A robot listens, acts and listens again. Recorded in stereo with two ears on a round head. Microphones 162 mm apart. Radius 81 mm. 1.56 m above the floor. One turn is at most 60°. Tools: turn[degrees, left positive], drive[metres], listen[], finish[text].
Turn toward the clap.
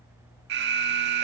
Action: listen[]
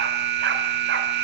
Action: listen[]
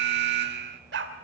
Action: finish[I can't make out a clap, only an alarm and a dog barking.]